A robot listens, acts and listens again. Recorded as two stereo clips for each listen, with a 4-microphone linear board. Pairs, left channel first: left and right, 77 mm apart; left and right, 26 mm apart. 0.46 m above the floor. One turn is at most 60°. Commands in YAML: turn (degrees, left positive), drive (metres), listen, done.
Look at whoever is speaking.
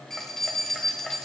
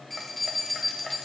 listen: true
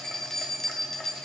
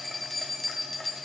listen: true
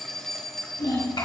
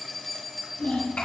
turn: 60
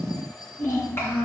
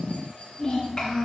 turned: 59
turn: 35
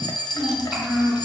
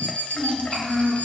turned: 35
done: "Found it: a child speaking, straight ahead."